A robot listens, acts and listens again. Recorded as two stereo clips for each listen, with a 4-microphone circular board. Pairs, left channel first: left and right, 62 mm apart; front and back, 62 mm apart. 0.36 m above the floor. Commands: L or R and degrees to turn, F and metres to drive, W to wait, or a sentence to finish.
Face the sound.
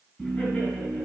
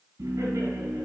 L160
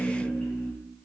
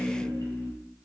L10
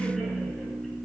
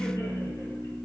Facing the laughter, 2 to 4 m away.